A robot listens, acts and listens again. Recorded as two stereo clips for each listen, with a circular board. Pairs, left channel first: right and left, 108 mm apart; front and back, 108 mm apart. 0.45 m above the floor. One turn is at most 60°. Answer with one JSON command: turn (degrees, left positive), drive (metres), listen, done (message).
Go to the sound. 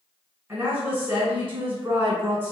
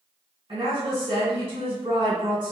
{"turn": 60}
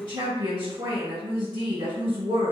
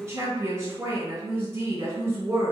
{"turn": 60}
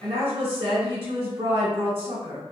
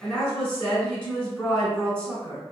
{"turn": 60}
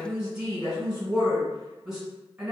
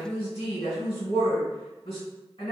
{"drive": 1.0}
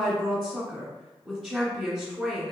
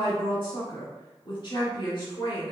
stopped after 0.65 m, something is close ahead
{"done": "Arrived at the woman speaking, straight ahead."}